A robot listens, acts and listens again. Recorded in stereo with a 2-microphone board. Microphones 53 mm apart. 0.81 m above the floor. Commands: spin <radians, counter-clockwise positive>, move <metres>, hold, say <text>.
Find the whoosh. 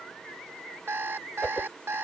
spin 0.44
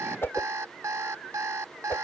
spin 2.36
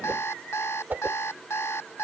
spin -0.61
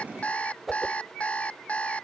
say Found it: a whoosh, straight ahead.